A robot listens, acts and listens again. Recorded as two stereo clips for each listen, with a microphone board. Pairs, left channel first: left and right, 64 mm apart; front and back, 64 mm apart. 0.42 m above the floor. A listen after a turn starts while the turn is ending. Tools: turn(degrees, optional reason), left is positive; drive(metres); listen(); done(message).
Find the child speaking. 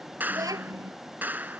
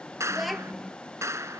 turn(degrees=-90, reason="The child speaking: 90° right.")
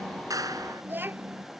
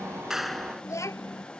turn(degrees=-30, reason="The child speaking is now 30° right.")
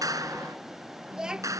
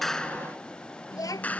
turn(degrees=-10, reason="The child speaking is now 10° right.")
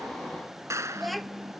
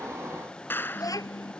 done("Facing the child speaking.")